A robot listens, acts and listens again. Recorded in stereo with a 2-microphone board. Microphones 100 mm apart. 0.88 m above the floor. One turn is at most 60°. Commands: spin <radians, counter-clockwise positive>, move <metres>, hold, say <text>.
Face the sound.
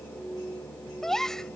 spin 0.52
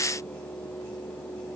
hold
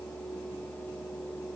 say I heard a gasp, but can't make it out now. It was about 25° right or 145° left.